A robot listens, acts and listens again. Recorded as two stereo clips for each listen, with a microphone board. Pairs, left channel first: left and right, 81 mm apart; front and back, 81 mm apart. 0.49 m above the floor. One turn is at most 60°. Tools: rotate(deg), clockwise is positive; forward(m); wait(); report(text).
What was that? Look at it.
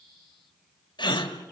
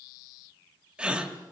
rotate(-60)
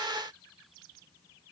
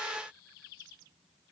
rotate(-45)
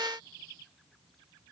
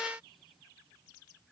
report("Facing where the gasp came from. I can't hear it now.")